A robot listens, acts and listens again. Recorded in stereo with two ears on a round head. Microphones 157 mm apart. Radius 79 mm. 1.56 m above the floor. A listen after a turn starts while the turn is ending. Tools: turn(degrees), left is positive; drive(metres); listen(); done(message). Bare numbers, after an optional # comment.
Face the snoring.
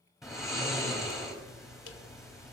turn(30)
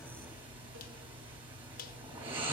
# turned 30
# So it is at 30° right.
turn(-30)
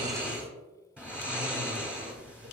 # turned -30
done("Found it: snoring, straight ahead.")